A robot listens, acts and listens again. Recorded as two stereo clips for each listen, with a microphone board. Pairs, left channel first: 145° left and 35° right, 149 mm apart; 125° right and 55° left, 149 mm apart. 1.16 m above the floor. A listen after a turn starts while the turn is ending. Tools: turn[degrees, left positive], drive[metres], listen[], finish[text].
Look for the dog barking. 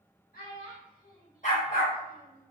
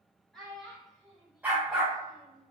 Thought: The dog barking: 140° left.
Action: turn[140]
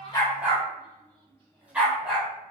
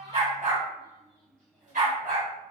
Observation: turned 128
Thought: The dog barking is now 50° left.
Action: turn[50]
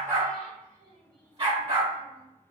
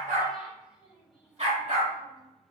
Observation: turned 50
Thought: The dog barking is now 15° left.
Action: turn[15]
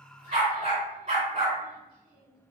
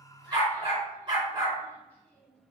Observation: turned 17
Action: finish[Found it: a dog barking, straight ahead, 2 to 4 m away.]